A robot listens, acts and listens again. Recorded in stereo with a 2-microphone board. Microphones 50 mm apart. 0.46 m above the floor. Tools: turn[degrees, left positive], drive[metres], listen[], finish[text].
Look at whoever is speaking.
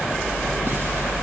Action: listen[]
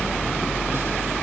Action: listen[]
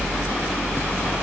Action: finish[I can't make out anyone speaking to turn to.]